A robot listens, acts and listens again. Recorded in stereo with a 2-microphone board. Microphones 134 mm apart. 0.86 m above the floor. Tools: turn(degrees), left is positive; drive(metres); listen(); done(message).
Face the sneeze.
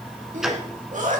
turn(degrees=-70)
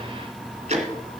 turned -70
listen()
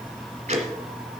done("I heard a sneeze, but can't make it out now. It was about straight ahead or 40° right.")